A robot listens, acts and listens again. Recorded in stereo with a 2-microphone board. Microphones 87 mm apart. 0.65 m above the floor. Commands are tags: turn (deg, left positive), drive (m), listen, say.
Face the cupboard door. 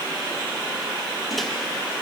<listen/>
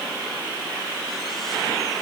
<listen/>
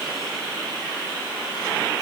<say>I can't make out a cupboard door to turn to.</say>